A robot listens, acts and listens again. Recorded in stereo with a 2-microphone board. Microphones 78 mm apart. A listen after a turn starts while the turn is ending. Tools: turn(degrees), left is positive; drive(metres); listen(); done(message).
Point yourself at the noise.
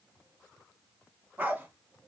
turn(degrees=-20)
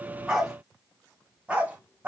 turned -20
turn(degrees=-20)
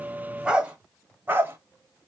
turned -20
turn(degrees=-30)
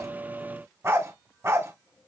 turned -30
turn(degrees=-30)
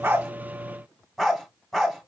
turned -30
done("Found it: a dog barking, straight ahead, 1 to 2 m away.")